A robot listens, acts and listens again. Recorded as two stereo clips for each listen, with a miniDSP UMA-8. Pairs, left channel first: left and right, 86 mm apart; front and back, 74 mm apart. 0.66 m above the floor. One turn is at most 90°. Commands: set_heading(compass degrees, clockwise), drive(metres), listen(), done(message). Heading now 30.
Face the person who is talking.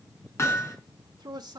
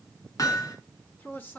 set_heading(95)
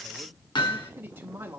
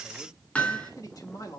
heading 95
set_heading(120)
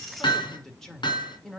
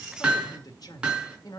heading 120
done("Found it: a man speaking, straight ahead, 1 to 2 m away.")